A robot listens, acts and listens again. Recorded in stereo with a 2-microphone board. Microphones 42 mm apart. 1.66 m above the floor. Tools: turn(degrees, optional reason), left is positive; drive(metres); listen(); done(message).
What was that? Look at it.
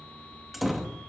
turn(degrees=-30)
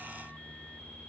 listen()
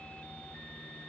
done("I heard a door slam, but can't make it out now. It was about 25° left or 145° right.")